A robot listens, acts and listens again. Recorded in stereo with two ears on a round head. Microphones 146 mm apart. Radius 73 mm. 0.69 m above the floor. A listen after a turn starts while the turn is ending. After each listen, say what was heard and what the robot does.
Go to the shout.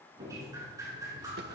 Keep listening.
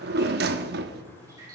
Keep listening.
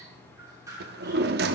I can't make out a shout to turn to.